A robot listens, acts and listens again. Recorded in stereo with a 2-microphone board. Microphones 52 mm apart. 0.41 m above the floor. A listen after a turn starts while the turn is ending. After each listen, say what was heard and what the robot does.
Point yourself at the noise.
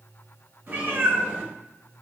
The cat meowing: about 35° right or 145° right. Turn 35° right.
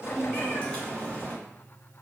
So it is at 30° left. Turn 30° left.
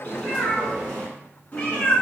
The cat meowing is now 35° left. Turn 35° left.
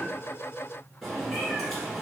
Facing the cat meowing.